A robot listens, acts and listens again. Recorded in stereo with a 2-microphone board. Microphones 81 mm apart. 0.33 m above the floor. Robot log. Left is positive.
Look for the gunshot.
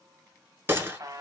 note: The gunshot: about 30° right or 150° right.
cmd yaw -30
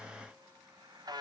cmd idle
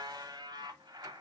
end: I heard a gunshot, but can't make it out now. It was about straight ahead or 120° right.